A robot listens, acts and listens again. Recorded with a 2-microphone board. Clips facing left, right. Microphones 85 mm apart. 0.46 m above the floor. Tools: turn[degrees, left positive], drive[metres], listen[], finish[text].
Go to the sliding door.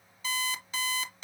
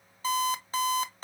Action: listen[]
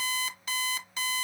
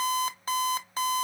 Action: listen[]
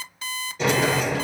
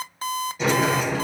Action: turn[30]
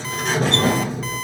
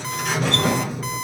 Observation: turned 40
Thought: So it is at 140° left.
Action: turn[140]
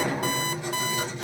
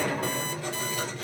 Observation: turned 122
Thought: The sliding door is now 20° left.
Action: turn[20]
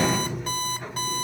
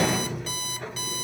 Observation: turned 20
Action: drive[1.0]
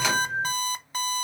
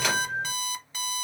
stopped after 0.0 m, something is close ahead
Action: finish[Blocked. The sliding door is further on, straight ahead.]